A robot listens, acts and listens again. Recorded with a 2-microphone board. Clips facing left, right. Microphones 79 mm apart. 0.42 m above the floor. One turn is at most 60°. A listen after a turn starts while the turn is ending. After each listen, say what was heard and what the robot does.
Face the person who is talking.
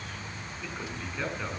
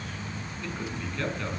Turn 30° left.
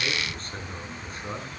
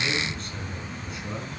So it is at 140° left. Turn 60° left.
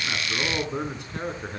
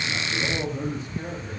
The man speaking is now 90° left. Turn 60° left.
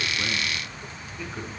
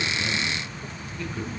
The man speaking is now 10° left. Turn 10° left.
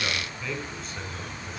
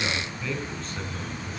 Facing the man speaking, 2 to 4 m away.